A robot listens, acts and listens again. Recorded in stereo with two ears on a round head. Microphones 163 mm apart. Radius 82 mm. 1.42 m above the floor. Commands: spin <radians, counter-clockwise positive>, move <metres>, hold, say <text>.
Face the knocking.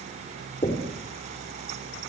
spin 0.52
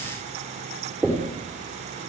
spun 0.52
say Facing the knocking.